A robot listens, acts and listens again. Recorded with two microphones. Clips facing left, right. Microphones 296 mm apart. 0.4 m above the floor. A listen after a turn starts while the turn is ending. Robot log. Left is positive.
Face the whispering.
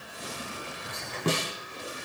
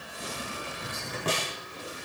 note: The whispering: about 50° right or 130° right.
cmd yaw -50
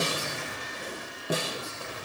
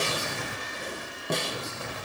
note: So it is at 85° right.
cmd yaw -85
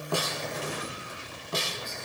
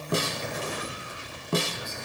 note: The whispering is now 10° right.
cmd yaw -10
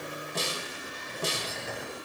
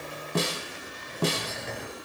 end: Found it: whispering, straight ahead, over 4 m away.